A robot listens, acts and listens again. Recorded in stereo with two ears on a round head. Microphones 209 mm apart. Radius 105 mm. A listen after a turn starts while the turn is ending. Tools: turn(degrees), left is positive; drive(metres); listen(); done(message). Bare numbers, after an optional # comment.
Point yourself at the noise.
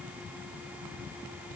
listen()
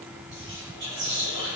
# The whispering: about 50° right or 130° right.
turn(-50)
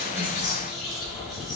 done("Facing the whispering.")